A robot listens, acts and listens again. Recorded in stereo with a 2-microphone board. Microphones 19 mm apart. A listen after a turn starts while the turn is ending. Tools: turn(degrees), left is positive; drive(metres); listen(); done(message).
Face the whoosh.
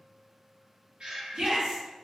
listen()
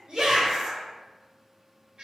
listen()
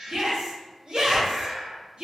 turn(degrees=-25)
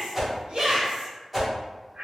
done("Found it: a whoosh, straight ahead.")